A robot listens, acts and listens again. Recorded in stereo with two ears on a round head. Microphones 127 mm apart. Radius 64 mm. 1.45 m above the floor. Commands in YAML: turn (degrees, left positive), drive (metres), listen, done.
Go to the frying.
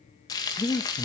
turn: 25
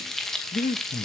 drive: 1.0
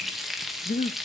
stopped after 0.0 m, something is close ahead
done: "Blocked. The frying is further on, straight ahead."